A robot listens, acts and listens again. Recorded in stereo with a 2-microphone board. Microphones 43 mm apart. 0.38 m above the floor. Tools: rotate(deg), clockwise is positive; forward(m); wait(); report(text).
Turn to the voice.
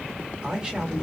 rotate(20)
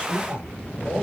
rotate(140)
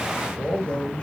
rotate(-30)
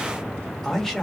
rotate(-10)
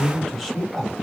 report("Facing the man speaking, 1 to 2 m away.")